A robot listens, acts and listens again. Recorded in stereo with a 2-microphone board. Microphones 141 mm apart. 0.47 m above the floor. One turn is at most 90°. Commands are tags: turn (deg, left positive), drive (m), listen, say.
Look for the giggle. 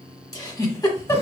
<turn deg="25"/>
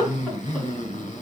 <say>Found it: a giggle, straight ahead.</say>